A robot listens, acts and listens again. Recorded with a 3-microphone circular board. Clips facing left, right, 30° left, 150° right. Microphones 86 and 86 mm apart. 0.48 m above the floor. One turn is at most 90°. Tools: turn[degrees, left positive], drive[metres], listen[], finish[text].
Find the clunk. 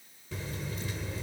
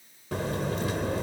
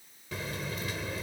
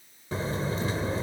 Action: listen[]
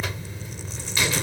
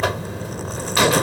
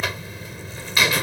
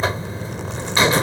Action: listen[]
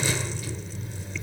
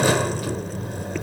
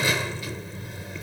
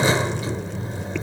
Action: finish[I can't make out a clunk, only a buzzer.]